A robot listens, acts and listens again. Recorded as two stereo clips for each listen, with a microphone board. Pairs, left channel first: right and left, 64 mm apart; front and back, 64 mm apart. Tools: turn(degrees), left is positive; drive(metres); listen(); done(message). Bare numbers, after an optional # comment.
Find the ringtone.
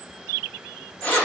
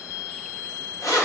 listen()
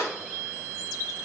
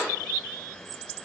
listen()
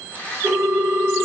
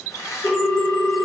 # The ringtone: 30° left.
turn(30)
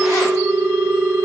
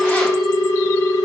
done("Facing the ringtone, under 1 m away.")